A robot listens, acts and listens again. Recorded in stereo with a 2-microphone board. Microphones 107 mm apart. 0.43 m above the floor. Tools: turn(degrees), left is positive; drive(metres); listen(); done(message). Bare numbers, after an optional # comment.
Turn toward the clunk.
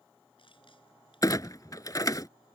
# The clunk: about 35° left or 145° left.
turn(35)
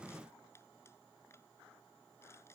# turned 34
listen()
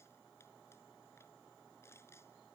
done("I heard a clunk, but can't make it out now. It was about straight ahead or 110° left.")